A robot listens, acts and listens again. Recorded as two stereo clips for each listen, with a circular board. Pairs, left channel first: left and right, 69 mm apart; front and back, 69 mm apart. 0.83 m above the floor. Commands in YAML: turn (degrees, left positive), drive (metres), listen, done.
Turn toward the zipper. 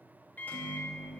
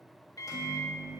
listen: true
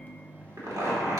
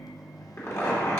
turn: -55
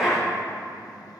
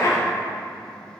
done: "Facing the zipper."